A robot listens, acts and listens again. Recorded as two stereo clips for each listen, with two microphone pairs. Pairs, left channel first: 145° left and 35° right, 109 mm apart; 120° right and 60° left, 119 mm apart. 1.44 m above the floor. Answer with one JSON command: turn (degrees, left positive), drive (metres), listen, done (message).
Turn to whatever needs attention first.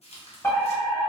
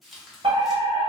{"turn": 85}
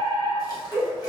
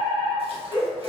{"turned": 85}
{"turn": 25}
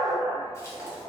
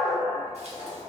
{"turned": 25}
{"turn": 10}
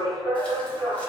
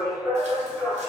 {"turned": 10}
{"done": "Found it: a fire alarm, straight ahead, 1 to 2 m away."}